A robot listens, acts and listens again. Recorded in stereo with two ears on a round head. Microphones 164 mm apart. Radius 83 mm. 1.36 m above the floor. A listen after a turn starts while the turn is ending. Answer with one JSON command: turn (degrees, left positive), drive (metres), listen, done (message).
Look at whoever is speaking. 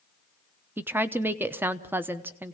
{"turn": -30}
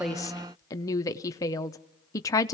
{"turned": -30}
{"turn": 20}
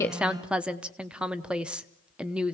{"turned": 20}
{"done": "Found it: a woman speaking, straight ahead, under 1 m away."}